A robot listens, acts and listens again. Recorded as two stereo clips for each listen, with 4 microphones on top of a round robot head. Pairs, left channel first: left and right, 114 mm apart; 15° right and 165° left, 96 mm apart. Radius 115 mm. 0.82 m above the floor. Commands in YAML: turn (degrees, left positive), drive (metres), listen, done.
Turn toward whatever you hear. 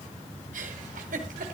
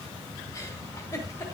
turn: -75
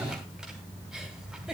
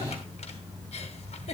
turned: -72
done: "Found it: a giggle, straight ahead."